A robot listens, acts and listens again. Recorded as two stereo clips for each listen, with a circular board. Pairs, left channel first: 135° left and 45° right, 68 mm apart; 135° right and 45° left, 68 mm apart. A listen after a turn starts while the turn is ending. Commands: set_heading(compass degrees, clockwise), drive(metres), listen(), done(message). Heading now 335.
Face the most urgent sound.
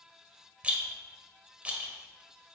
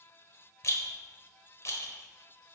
listen()
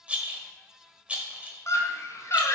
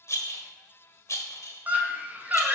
set_heading(230)
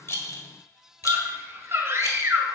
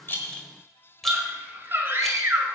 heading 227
done("Found it: a scream, straight ahead, 1 to 2 m away.")